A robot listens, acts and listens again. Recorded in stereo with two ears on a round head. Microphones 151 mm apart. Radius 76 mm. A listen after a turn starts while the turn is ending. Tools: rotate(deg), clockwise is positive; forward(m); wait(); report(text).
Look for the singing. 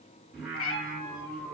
rotate(-30)
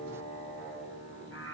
rotate(-150)
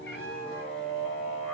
rotate(-30)
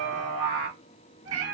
report("Found it: singing, straight ahead, 2 to 4 m away.")